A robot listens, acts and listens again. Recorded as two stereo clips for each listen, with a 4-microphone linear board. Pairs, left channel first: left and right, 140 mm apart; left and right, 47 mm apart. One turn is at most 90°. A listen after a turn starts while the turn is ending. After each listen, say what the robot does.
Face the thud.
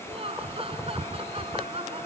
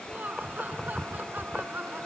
Keep listening.
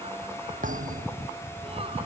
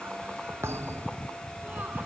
Turn 70° right.
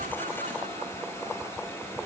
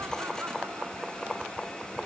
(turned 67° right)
Keep listening.
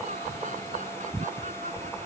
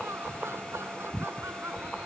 I heard a thud, but can't make it out now. It was about 5° right or 40° right.